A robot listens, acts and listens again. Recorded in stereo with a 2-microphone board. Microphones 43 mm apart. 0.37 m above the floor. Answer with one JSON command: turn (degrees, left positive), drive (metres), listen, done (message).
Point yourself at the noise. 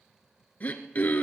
{"turn": 40}
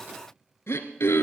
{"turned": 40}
{"turn": 100}
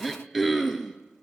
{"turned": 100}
{"done": "Facing the throat clearing."}